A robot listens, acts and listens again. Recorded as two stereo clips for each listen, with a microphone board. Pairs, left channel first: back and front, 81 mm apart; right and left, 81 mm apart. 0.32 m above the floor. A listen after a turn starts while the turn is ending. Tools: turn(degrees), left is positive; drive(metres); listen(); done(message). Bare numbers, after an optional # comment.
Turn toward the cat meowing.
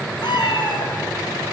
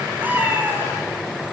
# The cat meowing: 155° left.
turn(155)
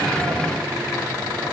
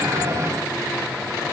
listen()
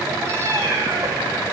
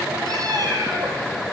# The cat meowing is now 55° left.
turn(55)
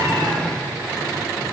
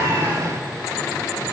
listen()
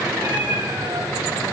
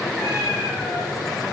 # The cat meowing is now 10° left.
turn(10)
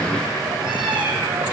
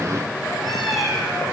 done("Found it: a cat meowing, straight ahead, over 4 m away.")